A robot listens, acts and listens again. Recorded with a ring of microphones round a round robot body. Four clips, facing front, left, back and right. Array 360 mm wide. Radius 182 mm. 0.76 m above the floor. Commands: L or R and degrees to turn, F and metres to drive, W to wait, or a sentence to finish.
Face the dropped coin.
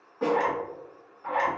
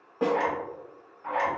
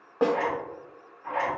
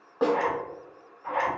W
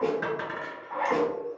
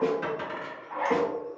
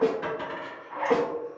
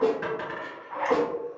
R15
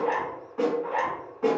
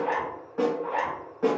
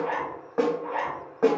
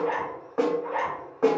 Facing where the dropped coin came from. I can't hear it now.